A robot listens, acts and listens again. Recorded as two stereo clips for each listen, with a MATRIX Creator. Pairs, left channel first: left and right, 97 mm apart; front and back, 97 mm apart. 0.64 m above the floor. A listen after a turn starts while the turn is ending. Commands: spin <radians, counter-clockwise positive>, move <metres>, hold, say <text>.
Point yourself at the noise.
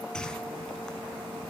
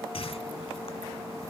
spin 0.17
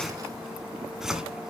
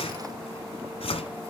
say Facing the whoosh, 1 to 2 m away.